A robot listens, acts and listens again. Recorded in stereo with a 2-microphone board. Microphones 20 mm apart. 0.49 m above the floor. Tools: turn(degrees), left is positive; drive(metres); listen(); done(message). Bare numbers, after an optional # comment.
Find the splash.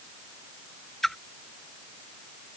turn(30)
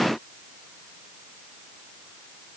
listen()
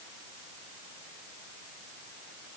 done("I heard a splash, but can't make it out now. It was about 20° right or 140° left.")